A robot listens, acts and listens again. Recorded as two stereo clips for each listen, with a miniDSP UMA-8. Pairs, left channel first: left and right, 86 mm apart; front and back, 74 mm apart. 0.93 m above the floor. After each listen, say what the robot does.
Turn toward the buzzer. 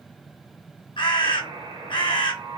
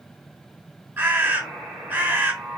Turn 100° right.
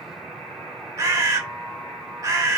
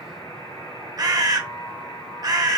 Facing the buzzer.